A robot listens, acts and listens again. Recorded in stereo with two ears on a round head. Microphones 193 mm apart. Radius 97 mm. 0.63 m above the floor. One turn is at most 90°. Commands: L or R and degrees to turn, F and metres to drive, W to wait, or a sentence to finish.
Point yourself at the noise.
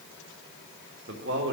R60
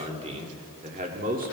R40
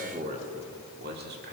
R50
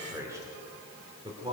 R25
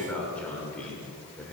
Found it: a man speaking, straight ahead, 2 to 4 m away.